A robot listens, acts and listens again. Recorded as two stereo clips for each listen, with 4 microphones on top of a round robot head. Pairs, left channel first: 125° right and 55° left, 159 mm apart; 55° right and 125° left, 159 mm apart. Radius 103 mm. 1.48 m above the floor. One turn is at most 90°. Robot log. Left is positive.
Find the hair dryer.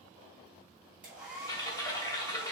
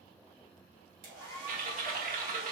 note: The hair dryer: 135° left.
cmd yaw +90
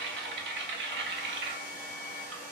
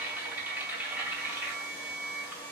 note: The hair dryer is now 20° left.
cmd yaw +20
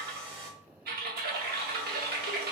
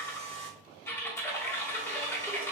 end: Facing the hair dryer, 1 to 2 m away.